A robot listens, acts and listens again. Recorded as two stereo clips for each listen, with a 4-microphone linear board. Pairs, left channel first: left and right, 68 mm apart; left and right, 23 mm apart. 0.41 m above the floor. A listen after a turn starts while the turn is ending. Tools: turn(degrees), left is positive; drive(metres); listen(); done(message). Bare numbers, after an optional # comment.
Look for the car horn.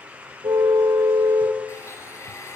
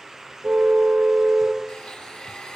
# The car horn: about 75° right or 105° right.
turn(-75)
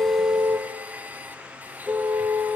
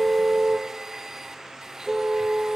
done("Found it: a car horn, straight ahead.")